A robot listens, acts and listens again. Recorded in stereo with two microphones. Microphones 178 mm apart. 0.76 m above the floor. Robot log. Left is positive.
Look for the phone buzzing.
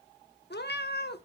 cmd idle
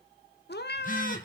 note: The phone buzzing: about 50° left or 130° left.
cmd yaw +50
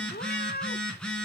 end: Found it: a phone buzzing, straight ahead, 2 to 4 m away.